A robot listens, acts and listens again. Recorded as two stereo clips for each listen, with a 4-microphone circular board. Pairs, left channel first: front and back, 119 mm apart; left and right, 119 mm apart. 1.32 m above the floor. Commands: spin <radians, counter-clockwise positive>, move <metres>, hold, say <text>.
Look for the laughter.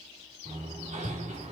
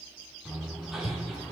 hold
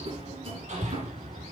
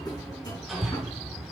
hold
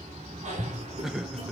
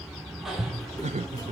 spin -1.66
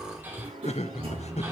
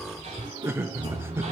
spin -0.35
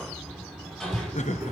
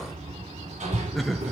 say Found it: laughter, straight ahead, 1 to 2 m away.